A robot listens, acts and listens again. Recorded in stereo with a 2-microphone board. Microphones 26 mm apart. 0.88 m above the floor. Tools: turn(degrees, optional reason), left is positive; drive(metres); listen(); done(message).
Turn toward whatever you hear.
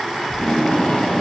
turn(degrees=45, reason="The tape being pulled: about 45° left or 135° left.")
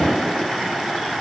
turn(degrees=95, reason="So it is at 95° left.")
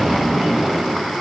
done("Facing the tape being pulled, over 4 m away.")